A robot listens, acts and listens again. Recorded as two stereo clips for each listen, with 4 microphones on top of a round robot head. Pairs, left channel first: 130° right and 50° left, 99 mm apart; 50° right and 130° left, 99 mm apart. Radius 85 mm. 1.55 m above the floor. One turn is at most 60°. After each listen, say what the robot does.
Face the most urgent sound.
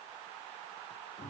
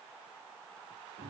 Keep listening.
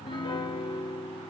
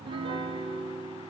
Keep listening.
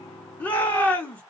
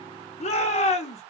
Turn 55° right.
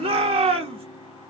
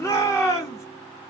Turn 15° left.
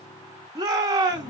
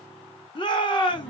Facing the shout.